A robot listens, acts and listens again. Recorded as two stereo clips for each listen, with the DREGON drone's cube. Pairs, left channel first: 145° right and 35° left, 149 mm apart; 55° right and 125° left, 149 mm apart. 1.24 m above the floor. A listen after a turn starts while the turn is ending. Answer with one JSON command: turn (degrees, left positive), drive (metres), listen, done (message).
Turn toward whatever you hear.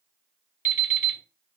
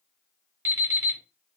{"turn": -165}
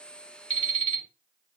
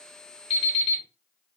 {"turn": -10}
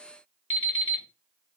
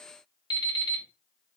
{"done": "Found it: an alarm clock, straight ahead."}